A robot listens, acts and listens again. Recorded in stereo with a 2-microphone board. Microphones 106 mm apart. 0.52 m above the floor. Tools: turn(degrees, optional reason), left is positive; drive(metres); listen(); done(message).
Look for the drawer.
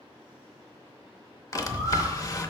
turn(degrees=35, reason="The drawer: about 35° left or 145° left.")
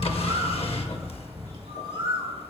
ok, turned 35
listen()
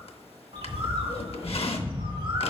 turn(degrees=110, reason="So it is at 110° left.")
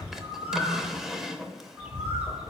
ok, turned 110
done("Facing the drawer, under 1 m away.")